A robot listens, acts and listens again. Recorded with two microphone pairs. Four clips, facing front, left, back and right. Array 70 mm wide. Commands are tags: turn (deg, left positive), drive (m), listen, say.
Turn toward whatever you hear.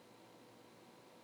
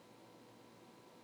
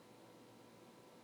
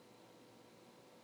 <listen/>
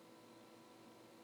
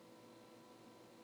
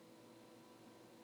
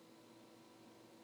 <listen/>
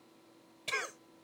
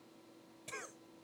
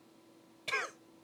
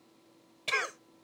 <turn deg="-100"/>
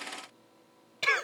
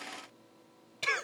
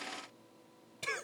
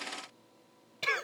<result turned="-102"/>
<say>Found it: a cough, straight ahead.</say>